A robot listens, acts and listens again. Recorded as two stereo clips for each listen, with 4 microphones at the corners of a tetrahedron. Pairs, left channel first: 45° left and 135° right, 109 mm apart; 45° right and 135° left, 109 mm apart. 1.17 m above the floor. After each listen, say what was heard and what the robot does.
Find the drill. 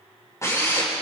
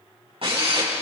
The drill: 105° left. Turn 105° left.
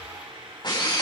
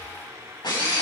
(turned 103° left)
Facing the drill.